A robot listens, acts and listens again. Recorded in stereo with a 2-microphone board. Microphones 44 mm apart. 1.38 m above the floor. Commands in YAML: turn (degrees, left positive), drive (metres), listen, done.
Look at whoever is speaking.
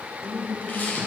turn: -45
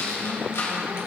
listen: true
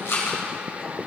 listen: true
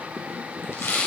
done: "I heard a woman speaking, but can't make it out now. It was about straight ahead or 90° right."